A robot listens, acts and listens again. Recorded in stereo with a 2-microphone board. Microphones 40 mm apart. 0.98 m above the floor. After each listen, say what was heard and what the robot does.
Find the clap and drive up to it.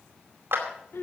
The clap: about 60° right or 120° right. Turn 60° right.
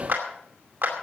So it is at 60° right. Turn 60° right.
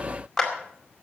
Drive 1.0 m forward.
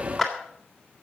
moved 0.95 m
Drive 1.0 m forward.
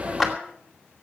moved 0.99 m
Drive 1.0 m forward.
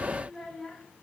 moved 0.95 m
Keep listening.
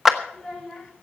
The clap is now 10° right. Turn 10° right.
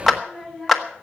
Drive 1.0 m forward.
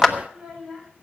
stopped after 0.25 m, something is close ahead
I am next to the clap.